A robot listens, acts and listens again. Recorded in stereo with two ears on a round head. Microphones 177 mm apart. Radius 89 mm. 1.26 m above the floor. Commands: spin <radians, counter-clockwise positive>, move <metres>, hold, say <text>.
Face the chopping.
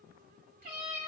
hold
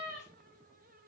hold
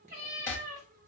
spin 0.52
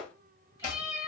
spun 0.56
spin 2.36
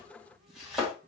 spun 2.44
say Facing the chopping.